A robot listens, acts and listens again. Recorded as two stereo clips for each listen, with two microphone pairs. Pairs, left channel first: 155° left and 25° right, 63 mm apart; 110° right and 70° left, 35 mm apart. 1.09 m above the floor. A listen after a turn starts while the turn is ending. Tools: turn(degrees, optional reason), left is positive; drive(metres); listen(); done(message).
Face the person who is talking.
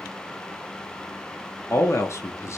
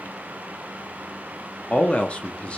turn(degrees=-170, reason="The man speaking: 170° right.")
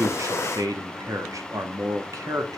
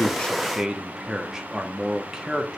done("Facing the man speaking.")